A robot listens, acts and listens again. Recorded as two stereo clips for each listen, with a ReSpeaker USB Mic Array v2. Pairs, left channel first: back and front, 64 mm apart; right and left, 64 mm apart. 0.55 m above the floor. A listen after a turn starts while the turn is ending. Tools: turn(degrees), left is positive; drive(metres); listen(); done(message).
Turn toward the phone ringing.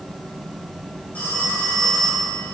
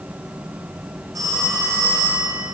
turn(degrees=115)
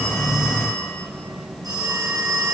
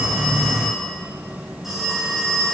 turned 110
done("Found it: a phone ringing, straight ahead, over 4 m away.")